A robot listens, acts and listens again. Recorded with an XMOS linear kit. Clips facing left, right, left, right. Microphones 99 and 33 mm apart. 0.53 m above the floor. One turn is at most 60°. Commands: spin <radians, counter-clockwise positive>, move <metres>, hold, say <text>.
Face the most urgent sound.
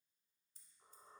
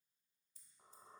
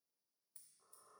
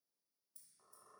hold
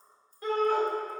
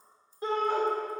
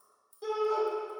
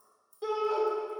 spin -0.44
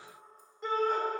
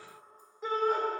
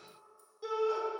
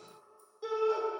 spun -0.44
say Found it: a shout, straight ahead, 1 to 2 m away.